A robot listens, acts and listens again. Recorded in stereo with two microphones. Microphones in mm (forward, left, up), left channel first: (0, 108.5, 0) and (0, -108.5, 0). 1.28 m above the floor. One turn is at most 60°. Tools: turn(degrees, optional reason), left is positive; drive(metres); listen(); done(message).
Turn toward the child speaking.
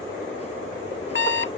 listen()
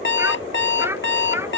turn(degrees=-30)
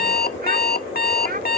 turn(degrees=-60, reason="So it is at 135° right.")
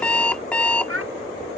turn(degrees=-60, reason="The child speaking is now 90° right.")
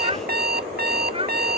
turn(degrees=-25, reason="The child speaking is now 25° right.")
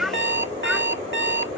done("Facing the child speaking.")